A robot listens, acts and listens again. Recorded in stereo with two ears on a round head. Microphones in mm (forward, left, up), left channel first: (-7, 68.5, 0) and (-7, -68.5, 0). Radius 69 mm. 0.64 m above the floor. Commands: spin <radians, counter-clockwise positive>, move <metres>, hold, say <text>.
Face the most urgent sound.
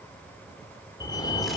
spin 0.44
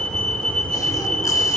say Facing the fire alarm, 2 to 4 m away.